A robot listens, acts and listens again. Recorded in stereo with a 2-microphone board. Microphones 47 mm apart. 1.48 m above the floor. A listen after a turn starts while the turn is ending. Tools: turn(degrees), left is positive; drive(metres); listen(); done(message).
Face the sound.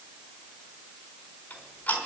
turn(degrees=40)
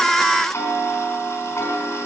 turn(degrees=100)
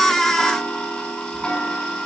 turn(degrees=15)
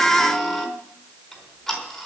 done("Facing the ticking, over 4 m away.")